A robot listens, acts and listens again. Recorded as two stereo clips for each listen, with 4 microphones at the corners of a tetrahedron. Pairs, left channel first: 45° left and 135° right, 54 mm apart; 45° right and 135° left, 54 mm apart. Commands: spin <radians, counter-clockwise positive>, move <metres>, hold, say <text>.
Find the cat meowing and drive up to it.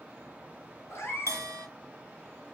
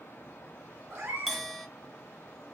spin 1.48
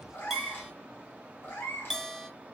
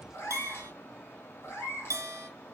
move 1.0
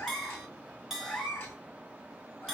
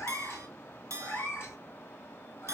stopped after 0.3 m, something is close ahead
say Blocked. The cat meowing is further on, straight ahead.